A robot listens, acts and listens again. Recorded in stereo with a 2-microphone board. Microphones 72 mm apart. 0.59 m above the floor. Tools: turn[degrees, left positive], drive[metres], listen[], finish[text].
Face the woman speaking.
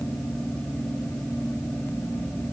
Action: listen[]
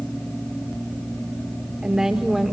Action: turn[30]
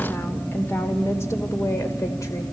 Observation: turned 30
Thought: So it is at 140° left.
Action: turn[140]
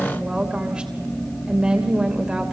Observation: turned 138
Thought: The woman speaking is now 10° right.
Action: turn[-10]
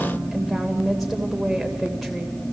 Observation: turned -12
Action: finish[Found it: a woman speaking, straight ahead.]